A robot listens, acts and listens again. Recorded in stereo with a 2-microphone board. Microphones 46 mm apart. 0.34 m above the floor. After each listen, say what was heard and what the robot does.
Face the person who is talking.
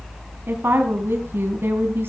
The woman speaking: about 60° right or 120° right. Turn 60° right.
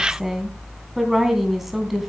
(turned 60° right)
Found it: a woman speaking, straight ahead, 2 to 4 m away.